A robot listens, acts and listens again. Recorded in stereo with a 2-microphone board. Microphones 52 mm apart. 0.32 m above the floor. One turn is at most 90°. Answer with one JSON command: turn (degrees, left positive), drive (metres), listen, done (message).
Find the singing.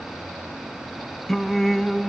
{"turn": 30}
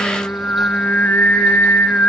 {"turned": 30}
{"turn": 90}
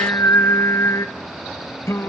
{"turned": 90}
{"turn": 75}
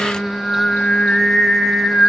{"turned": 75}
{"turn": 15}
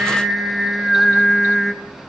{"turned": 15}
{"done": "Facing the singing."}